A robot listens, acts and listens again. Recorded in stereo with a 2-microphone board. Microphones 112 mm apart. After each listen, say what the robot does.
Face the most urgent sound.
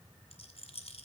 Keep listening.
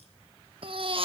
Turn 50° right.
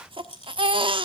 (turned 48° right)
Turn 65° right.
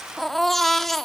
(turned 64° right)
Facing the baby crying, 1 to 2 m away.